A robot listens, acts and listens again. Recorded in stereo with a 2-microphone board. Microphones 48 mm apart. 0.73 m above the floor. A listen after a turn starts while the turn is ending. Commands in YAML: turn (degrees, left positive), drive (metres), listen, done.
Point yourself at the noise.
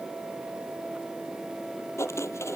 turn: 75
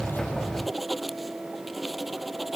done: "Facing the writing."